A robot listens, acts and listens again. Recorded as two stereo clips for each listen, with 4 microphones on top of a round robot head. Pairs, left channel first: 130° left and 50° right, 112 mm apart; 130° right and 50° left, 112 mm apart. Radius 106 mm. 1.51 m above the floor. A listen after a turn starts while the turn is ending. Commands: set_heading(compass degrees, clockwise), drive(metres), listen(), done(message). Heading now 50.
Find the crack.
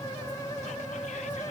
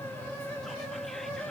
listen()
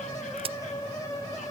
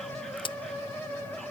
set_heading(135)
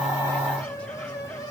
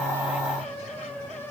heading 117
set_heading(137)
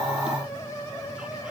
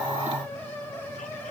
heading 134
done("I heard a crack from this way, but can't make it out now.")